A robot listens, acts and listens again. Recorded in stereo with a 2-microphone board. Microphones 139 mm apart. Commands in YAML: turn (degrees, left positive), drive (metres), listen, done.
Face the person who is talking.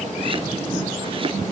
listen: true
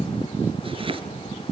listen: true
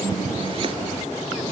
done: "I can't make out anyone speaking to turn to."